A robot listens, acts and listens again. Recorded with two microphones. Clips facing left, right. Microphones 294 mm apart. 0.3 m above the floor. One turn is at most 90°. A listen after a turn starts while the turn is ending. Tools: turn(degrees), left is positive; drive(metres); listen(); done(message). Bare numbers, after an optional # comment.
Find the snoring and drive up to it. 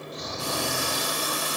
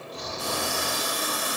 # The snoring: about 60° right or 120° right.
turn(-60)
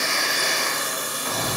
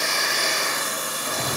# So it is at 20° right.
turn(-20)
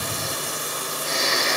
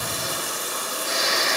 drive(1.0)
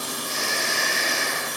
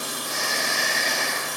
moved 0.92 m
drive(1.0)
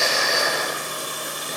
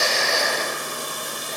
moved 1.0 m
# The snoring is now 15° left.
turn(15)
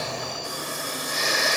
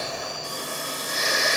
drive(1.0)
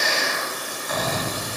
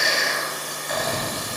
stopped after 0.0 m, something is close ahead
# The snoring is now 10° left.
turn(10)
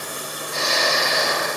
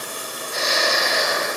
done("I am next to the snoring.")